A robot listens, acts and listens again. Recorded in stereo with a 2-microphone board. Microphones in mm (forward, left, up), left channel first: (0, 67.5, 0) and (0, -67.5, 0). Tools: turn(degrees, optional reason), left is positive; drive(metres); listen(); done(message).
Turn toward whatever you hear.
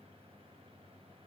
listen()
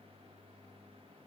listen()
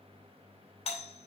turn(degrees=50, reason="The doorbell: about 50° left or 130° left.")
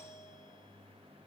turn(degrees=65, reason="So it is at 65° left.")
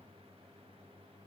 listen()
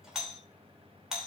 done("Facing the doorbell, 2 to 4 m away.")